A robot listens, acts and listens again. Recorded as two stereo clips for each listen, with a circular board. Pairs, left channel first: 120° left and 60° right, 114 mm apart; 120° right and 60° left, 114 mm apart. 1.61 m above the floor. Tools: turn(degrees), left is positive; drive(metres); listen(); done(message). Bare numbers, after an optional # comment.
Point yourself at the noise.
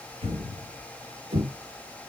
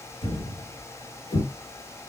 # The thud: 80° right.
turn(-80)
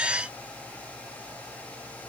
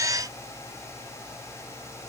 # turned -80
done("Facing where the thud came from. I can't hear it now.")